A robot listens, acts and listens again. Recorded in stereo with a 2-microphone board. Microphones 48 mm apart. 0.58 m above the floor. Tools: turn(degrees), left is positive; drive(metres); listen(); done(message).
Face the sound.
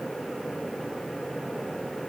listen()
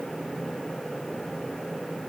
listen()
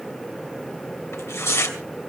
turn(degrees=70)
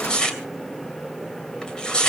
turn(degrees=15)
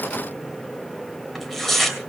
done("Facing the tearing paper.")